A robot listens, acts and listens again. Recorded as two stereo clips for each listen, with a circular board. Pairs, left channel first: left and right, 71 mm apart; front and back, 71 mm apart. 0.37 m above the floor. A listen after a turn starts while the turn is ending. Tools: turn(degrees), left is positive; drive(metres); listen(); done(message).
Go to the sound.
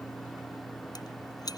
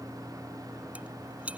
turn(degrees=110)
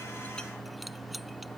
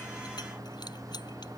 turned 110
listen()
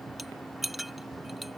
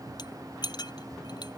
drive(metres=1.0)
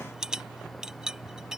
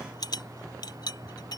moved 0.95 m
turn(degrees=-10)
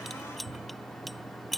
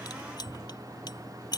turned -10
drive(metres=1.0)
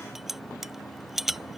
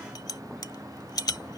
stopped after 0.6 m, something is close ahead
done("I am next to the rattle.")